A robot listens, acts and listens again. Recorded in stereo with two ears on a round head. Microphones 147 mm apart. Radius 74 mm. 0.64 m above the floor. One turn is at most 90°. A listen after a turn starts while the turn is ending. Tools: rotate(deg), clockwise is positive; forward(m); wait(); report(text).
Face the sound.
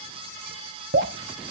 rotate(75)
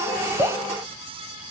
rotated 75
wait()
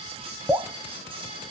rotate(15)
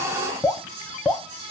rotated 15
report("Facing the dripping.")